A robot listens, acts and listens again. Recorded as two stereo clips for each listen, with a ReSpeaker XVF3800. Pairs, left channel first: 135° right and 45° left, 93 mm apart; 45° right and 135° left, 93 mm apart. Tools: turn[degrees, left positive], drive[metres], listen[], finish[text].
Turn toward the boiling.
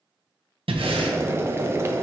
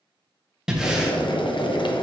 Thought: The boiling: 15° right.
Action: turn[-15]
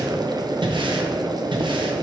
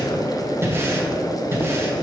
Action: finish[Found it: boiling, straight ahead, under 1 m away.]